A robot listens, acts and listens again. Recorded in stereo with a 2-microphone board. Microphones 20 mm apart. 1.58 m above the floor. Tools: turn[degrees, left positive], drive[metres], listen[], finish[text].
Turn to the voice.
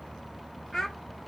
Thought: The child speaking: about 25° left or 155° left.
Action: turn[25]
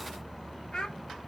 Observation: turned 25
Thought: So it is at 130° left.
Action: turn[130]
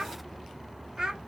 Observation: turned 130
Thought: The child speaking is now 40° right.
Action: turn[-40]
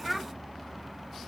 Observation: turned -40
Thought: The child speaking is now 10° right.
Action: turn[-10]
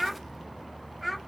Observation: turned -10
Action: finish[Facing the child speaking, under 1 m away.]